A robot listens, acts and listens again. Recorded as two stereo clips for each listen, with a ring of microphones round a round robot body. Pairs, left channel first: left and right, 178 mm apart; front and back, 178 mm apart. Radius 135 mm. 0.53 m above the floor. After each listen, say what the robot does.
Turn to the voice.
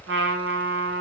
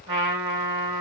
Keep listening.
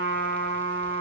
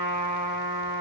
Keep listening.
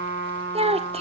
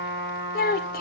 Turn 35° right.
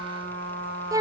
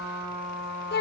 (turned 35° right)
Turn 20° right.
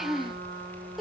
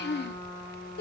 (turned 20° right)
Facing the child speaking.